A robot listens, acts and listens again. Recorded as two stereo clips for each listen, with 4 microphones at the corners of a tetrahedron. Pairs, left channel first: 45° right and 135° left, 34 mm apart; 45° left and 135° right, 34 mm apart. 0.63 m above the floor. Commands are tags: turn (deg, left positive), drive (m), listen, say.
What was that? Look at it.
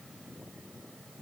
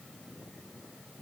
<listen/>
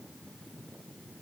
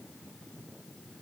<listen/>
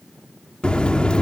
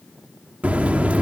<turn deg="-100"/>
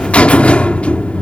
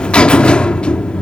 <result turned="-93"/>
<say>Found it: a buzzer, straight ahead.</say>